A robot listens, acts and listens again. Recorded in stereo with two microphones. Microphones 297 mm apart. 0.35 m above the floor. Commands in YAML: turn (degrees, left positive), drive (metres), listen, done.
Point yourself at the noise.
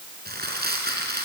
turn: -30
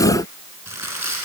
turn: -120
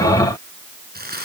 turn: -30
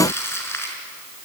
turn: 10
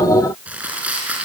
done: "Found it: crumpling, straight ahead."